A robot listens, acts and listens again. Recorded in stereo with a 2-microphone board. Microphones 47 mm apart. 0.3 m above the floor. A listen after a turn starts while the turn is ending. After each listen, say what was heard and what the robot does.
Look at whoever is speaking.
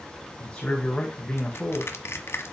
Turn 30° left.
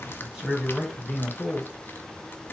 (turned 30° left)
So it is at 15° right. Turn 15° right.
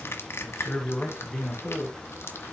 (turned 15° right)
Facing the man speaking, 2 to 4 m away.